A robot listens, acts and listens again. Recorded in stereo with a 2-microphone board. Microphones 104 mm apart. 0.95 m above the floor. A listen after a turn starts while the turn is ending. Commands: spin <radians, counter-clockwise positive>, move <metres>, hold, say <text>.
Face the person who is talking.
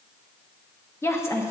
spin 0.44
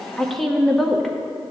say Facing the woman speaking.